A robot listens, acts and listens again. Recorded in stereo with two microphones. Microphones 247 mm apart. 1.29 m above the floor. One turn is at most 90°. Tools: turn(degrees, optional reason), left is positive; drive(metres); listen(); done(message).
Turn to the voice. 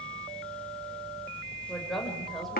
turn(degrees=30)
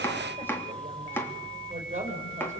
turn(degrees=-30, reason="So it is at 30° right.")
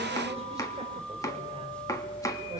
listen()
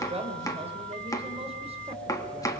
turn(degrees=-25, reason="The woman speaking is now 25° right.")
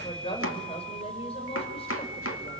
turn(degrees=25, reason="The woman speaking is now 25° left.")
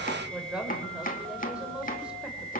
done("Facing the woman speaking, over 4 m away.")